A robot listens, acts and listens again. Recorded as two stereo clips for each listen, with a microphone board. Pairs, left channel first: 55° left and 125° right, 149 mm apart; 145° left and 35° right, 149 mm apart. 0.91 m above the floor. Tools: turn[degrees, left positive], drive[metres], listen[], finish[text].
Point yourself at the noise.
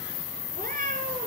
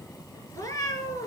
Thought: The cat meowing: 145° right.
Action: turn[-145]
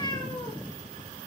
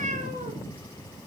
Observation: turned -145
Action: finish[Found it: a cat meowing, straight ahead, over 4 m away.]